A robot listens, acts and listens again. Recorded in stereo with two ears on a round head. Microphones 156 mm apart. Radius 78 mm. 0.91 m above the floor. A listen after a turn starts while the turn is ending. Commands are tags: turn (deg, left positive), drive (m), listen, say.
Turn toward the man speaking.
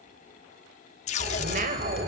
<turn deg="-45"/>
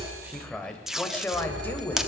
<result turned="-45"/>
<turn deg="15"/>
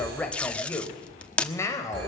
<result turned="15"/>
<turn deg="20"/>
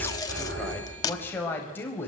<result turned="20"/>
<turn deg="10"/>
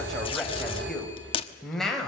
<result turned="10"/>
<say>Facing the man speaking.</say>